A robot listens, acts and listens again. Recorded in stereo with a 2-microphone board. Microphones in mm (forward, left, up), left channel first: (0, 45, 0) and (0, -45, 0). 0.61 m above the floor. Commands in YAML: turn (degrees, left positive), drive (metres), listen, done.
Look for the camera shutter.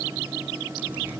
listen: true
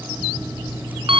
listen: true
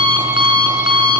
done: "I can't make out a camera shutter to turn to."